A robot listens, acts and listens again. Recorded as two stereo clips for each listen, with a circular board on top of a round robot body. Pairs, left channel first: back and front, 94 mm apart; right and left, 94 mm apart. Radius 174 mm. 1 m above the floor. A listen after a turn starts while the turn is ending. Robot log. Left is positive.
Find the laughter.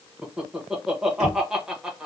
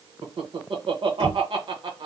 note: The laughter: 85° left.
cmd yaw +85
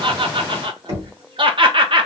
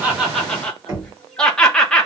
note: The laughter is now 10° right.
cmd yaw -10
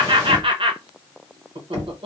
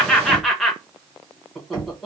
end: Found it: laughter, straight ahead.